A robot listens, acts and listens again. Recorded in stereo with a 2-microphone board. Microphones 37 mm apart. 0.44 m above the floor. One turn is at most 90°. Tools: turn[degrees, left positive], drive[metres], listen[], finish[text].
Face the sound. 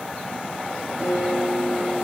Thought: The guitar: about 35° right or 145° right.
Action: turn[-35]
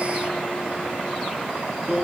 Thought: So it is at 110° right.
Action: turn[-90]
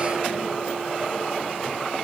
Thought: Nothing new. It was at 20° right.
Action: turn[-20]
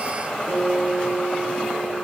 Action: finish[Found it: a guitar, straight ahead, over 4 m away.]